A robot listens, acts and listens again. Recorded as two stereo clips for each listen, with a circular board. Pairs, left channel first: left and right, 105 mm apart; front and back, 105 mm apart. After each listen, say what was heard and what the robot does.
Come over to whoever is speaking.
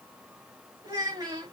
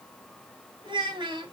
The child speaking: 140° right. Turn 140° right.
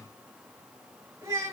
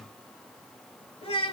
The child speaking is now 30° right. Turn 30° right.
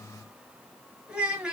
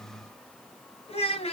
The child speaking is now 10° right. Turn 10° right.
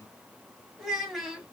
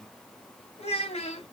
Drive 1.0 m forward.
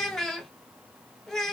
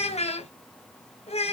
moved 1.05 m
Drive 1.0 m forward.
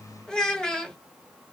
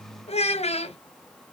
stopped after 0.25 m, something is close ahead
Arrived at the child speaking, straight ahead.